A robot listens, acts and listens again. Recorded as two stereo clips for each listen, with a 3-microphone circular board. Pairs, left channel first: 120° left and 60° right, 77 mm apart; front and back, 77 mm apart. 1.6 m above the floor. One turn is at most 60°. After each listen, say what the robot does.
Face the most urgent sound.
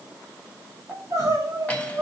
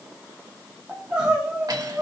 Turn 60° right.
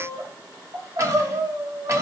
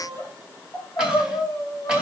Turn 30° right.
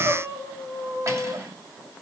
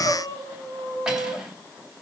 Turn 25° right.
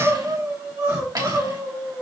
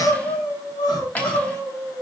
Found it: crying, straight ahead, 2 to 4 m away.